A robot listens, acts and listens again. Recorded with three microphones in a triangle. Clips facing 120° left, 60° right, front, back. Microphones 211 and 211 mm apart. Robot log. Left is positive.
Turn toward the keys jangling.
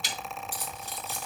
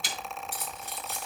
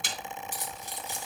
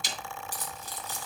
note: The keys jangling: 70° right.
cmd yaw -70
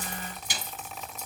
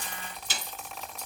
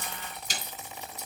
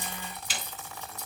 end: Found it: keys jangling, straight ahead, over 4 m away.